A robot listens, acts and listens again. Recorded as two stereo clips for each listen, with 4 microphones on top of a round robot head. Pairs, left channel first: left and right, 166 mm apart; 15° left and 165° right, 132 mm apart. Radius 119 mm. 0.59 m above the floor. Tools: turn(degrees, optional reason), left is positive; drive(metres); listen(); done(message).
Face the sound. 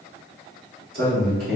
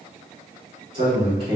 turn(degrees=-110, reason="The man speaking: 110° right.")
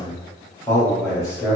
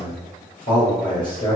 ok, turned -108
turn(degrees=20, reason="The man speaking is now 20° left.")
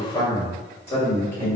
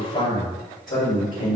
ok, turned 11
turn(degrees=15, reason="The man speaking is now 15° left.")
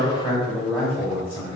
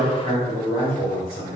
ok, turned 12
turn(degrees=10, reason="The man speaking is now 10° left.")
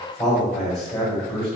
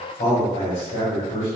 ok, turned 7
done("Facing the man speaking.")